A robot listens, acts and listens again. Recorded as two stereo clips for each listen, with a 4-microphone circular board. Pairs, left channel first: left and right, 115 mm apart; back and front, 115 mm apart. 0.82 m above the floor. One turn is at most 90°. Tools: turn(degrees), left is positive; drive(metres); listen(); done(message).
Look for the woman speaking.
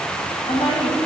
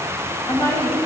turn(degrees=90)
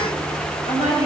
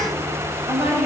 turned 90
turn(degrees=70)
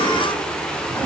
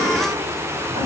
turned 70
listen()
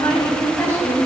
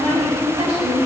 turn(degrees=25)
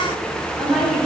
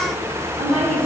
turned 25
done("Found it: a woman speaking, straight ahead, over 4 m away.")